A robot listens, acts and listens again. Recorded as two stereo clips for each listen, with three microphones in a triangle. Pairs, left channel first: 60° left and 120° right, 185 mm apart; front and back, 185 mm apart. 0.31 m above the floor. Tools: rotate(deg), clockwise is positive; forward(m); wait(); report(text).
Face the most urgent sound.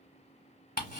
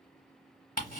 wait()
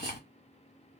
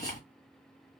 wait()
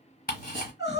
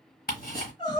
rotate(-60)
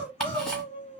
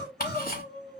rotate(-10)
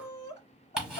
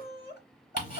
report("Facing the crying, 1 to 2 m away.")